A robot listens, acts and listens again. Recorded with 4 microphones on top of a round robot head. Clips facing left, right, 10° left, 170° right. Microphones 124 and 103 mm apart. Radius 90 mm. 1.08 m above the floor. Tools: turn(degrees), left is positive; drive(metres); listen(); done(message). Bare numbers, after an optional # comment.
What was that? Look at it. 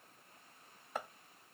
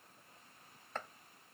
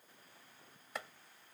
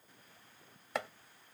# The chopping: 170° left.
turn(170)
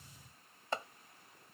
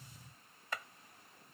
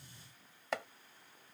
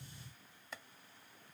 # The chopping is now 30° left.
turn(30)
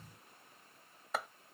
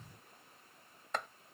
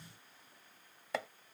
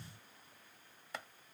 done("Found it: chopping, straight ahead.")